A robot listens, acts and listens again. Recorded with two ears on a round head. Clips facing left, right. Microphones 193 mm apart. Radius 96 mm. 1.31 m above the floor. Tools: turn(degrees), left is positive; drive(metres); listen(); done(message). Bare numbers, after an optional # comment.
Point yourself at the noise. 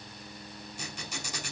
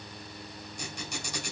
turn(30)
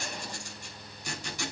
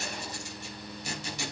# So it is at 20° right.
turn(-20)
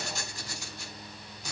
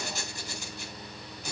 done("Facing the squeak.")